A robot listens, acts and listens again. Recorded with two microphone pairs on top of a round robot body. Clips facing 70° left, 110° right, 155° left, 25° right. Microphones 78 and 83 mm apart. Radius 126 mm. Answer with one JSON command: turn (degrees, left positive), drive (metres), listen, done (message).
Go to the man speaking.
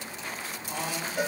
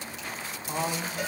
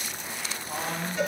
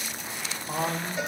{"turn": -65}
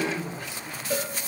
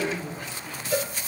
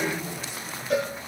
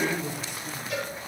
{"drive": 1.0}
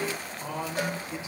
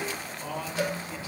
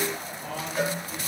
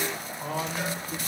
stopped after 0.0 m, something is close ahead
{"done": "Something is in my way. I am facing the man speaking but have not reached it."}